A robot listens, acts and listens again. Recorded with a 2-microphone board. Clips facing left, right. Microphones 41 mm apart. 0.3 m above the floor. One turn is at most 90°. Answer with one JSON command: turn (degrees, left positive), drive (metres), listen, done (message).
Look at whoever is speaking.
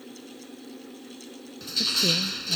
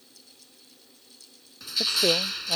{"turn": -50}
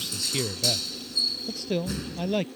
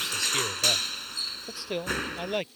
{"done": "Facing the man speaking."}